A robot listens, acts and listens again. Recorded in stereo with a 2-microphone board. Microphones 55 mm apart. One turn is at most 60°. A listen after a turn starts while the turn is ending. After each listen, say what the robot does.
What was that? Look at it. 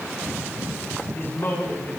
Turn 50° left.
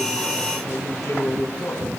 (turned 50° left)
Turn 60° left.
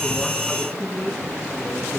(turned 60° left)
Turn 30° left.
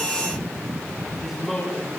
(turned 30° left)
Facing the man speaking, over 4 m away.